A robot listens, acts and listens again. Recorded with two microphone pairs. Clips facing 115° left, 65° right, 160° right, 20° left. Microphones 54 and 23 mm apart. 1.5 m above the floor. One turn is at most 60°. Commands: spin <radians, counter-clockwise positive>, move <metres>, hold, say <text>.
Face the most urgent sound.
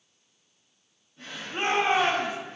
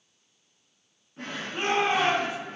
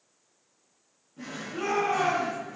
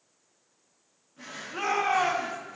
spin 0.96
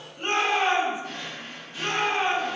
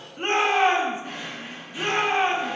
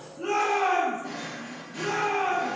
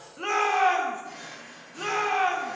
spin -0.17
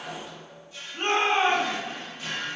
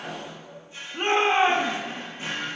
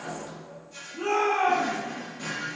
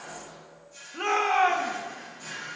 say Facing the shout.